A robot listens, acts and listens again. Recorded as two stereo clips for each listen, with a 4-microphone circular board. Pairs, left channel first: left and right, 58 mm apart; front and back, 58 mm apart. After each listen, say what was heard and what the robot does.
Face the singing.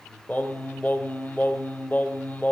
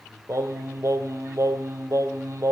The singing: 145° left. Turn 145° left.
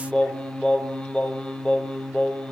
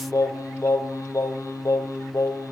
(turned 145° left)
The singing is now 15° left. Turn 15° left.
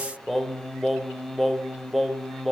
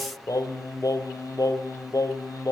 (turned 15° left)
Found it: singing, straight ahead.